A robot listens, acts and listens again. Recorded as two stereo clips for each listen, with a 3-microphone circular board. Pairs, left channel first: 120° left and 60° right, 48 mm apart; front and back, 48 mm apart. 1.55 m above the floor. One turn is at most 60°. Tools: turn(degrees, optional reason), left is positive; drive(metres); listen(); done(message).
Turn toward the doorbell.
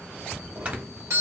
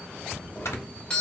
turn(degrees=-60, reason="The doorbell: 70° right.")
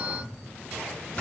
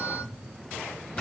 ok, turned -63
turn(degrees=-10, reason="The doorbell is now 10° right.")
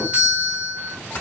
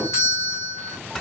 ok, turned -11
done("Facing the doorbell, 1 to 2 m away.")